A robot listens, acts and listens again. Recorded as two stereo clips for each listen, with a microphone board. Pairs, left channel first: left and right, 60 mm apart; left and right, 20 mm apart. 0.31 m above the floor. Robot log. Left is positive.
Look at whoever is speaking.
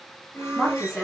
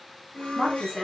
cmd yaw +30
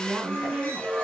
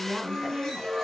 note: So it is at 25° right.
cmd yaw -25
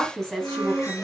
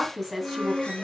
note: The woman speaking is now 10° left.
cmd yaw +10
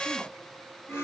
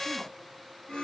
cmd idle
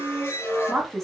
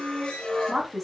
end: Found it: a woman speaking, straight ahead.